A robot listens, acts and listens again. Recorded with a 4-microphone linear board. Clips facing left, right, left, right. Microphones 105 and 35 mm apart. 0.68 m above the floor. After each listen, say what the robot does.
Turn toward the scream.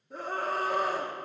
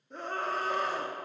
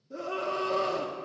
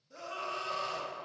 Turn 30° left.
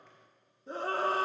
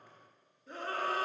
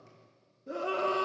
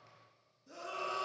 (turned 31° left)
Turn 145° left.
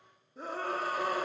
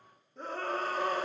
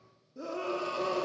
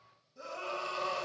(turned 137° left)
Facing the scream, under 1 m away.